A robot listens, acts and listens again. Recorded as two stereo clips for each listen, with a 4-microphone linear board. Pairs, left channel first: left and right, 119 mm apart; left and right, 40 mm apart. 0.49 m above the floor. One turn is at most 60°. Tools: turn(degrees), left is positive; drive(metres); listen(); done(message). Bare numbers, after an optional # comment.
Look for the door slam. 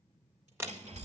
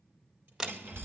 # The door slam: about 20° right or 160° right.
turn(-20)
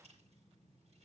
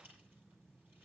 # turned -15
listen()
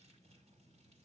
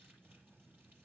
done("I heard a door slam, but can't make it out now. It was about 5° right or 145° right.")